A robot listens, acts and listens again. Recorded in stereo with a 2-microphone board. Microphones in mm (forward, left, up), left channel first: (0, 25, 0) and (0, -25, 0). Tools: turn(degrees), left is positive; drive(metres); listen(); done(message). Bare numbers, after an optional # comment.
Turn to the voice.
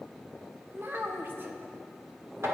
# The child speaking: about 45° right or 135° right.
turn(-45)
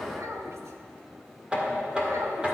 listen()
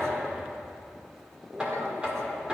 listen()
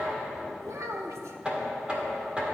# So it is at 85° right.
turn(-85)
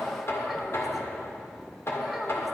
listen()
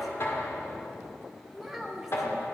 done("Found it: a child speaking, straight ahead, 1 to 2 m away.")